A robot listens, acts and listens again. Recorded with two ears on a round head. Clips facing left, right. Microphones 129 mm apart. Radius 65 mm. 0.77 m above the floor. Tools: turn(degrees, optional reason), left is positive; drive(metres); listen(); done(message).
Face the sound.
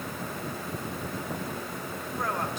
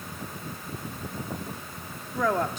turn(degrees=-65, reason="The woman speaking: about 65° right or 115° right.")
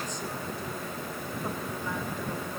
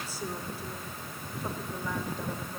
listen()
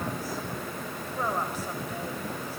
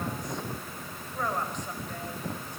done("Facing the woman speaking.")